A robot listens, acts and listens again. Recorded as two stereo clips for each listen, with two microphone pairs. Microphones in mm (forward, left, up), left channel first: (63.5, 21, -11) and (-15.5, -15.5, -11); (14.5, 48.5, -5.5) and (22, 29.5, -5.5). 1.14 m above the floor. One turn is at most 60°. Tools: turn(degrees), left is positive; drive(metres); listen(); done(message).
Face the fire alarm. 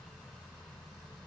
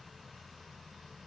listen()
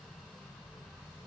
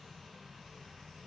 listen()
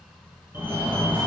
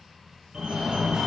turn(degrees=-60)
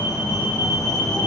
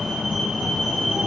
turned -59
turn(degrees=-35)
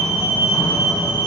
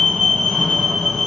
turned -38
done("Found it: a fire alarm, straight ahead.")